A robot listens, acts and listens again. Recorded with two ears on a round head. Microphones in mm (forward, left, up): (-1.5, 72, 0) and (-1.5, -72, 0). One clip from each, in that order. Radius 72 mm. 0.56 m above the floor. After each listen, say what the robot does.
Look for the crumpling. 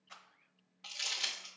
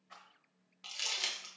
Turn 30° right.
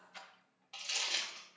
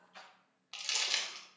Turn 135° right.
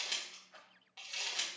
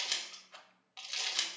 Turn 40° right.
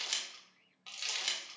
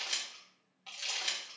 Turn 25° left.
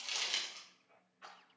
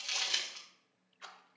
Facing the crumpling, 1 to 2 m away.